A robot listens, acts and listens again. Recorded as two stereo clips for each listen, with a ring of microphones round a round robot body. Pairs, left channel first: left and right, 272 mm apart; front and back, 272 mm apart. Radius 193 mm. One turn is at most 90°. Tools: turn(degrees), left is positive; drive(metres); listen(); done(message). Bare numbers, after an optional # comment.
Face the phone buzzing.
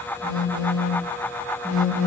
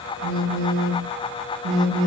# The phone buzzing: 150° right.
turn(-90)
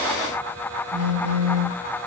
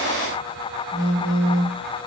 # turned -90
# The phone buzzing is now 45° right.
turn(-45)
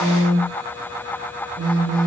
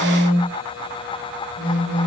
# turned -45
# The phone buzzing is now 15° right.
turn(-15)
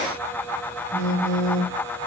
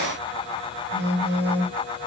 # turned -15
done("Facing the phone buzzing.")